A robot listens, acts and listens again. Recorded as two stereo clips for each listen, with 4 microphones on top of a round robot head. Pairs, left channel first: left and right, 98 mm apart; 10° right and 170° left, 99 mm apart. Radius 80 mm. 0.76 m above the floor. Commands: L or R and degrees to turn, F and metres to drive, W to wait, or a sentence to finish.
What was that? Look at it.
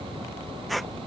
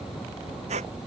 L180
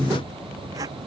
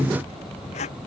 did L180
R25
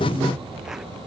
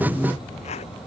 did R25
W
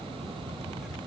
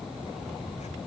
W
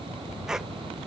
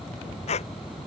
Found it: a squeak, straight ahead.